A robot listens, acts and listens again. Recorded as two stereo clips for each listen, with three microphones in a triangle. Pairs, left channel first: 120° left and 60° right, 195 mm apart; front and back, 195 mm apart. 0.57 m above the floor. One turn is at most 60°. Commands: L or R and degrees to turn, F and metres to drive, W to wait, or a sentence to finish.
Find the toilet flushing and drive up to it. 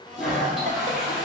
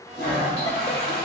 L30
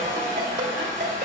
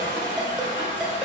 R15
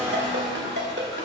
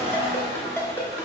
W
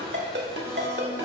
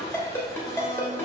W
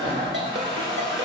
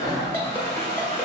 F1.0
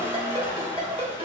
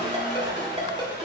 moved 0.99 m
L20
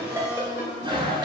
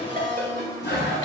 F1.0
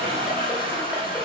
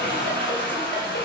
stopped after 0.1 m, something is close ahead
I am next to the toilet flushing.